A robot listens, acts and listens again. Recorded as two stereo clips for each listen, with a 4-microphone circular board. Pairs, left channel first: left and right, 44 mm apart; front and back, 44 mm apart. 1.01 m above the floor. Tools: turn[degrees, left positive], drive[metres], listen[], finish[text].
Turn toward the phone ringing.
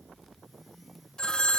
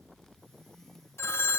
Thought: The phone ringing: 15° left.
Action: turn[15]
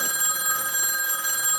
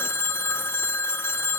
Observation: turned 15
Action: finish[Found it: a phone ringing, straight ahead.]